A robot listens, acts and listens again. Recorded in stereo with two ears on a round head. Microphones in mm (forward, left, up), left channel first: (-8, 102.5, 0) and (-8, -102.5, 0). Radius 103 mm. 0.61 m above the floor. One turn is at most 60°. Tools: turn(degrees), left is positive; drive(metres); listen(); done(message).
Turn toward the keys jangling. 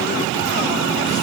listen()
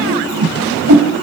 listen()
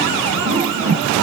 done("I can't make out keys jangling, only a whoosh.")